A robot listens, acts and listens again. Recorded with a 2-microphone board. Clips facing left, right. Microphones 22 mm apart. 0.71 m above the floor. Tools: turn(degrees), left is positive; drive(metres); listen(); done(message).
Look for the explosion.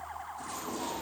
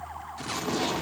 turn(degrees=-65)
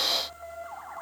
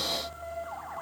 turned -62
listen()
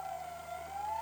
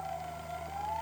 done("I heard an explosion, but can't make it out now. It was about 5° right or 50° right.")